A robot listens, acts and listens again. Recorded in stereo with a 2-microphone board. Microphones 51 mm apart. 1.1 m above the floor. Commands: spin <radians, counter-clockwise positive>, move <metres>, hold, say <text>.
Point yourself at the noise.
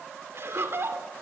spin -0.96
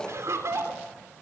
spin -1.22
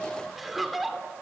say Found it: laughter, straight ahead.